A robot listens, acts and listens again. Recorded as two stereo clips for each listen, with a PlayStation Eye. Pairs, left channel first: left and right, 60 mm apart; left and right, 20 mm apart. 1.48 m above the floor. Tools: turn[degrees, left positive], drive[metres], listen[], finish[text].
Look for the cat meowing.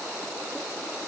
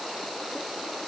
Action: listen[]
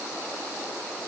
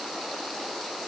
Action: listen[]
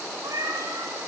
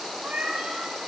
Action: turn[-90]
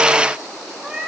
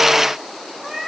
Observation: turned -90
Thought: So it is at 10° right.
Action: turn[-10]
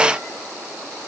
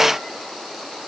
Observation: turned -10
Action: listen[]
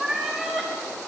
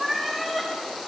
Thought: The cat meowing is now 10° right.
Action: turn[-10]
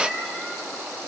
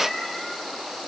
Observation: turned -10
Action: finish[Facing the cat meowing.]